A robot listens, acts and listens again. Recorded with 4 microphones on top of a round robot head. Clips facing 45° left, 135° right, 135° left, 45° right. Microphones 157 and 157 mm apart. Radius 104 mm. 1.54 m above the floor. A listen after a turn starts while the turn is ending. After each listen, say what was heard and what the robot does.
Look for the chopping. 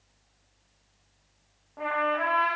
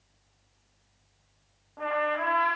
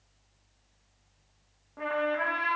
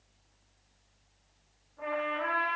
Keep listening.
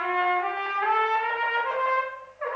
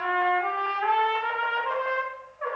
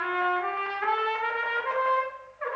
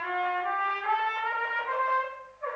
Keep listening.
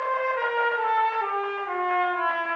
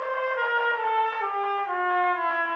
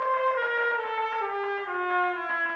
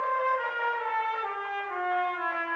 I can't make out chopping to turn to.